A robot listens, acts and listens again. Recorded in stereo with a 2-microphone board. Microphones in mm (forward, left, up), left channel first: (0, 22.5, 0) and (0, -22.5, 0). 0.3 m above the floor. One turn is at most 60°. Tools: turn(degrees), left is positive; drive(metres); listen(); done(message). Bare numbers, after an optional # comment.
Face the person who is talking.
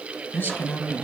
# The man speaking: about 40° left or 140° left.
turn(40)
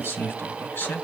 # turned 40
# So it is at 130° left.
turn(60)
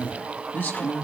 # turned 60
# The man speaking is now 55° left.
turn(55)
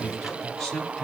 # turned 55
# The man speaking is now 15° left.
turn(15)
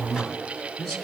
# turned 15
done("Facing the man speaking.")